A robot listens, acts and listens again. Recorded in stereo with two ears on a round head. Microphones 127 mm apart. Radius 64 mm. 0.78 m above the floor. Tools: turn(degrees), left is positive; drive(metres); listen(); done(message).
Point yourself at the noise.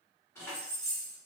turn(degrees=20)
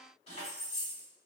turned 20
turn(degrees=125)
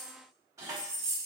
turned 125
turn(degrees=-30)
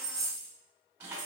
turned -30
turn(degrees=-15)
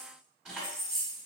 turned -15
done("Facing the keys jangling, 1 to 2 m away.")